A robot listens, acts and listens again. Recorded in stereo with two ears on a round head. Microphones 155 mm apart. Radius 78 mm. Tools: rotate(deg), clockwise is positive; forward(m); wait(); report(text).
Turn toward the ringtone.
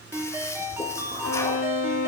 rotate(30)
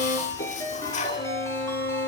rotate(-15)
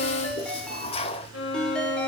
report("Found it: a ringtone, straight ahead.")